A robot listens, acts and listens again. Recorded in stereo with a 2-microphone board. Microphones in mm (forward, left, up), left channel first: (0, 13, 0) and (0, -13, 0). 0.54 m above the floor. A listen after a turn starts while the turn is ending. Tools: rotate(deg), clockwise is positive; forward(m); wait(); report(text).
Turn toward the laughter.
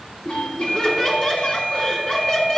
rotate(-30)
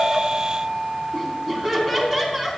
report("Facing the laughter, over 4 m away.")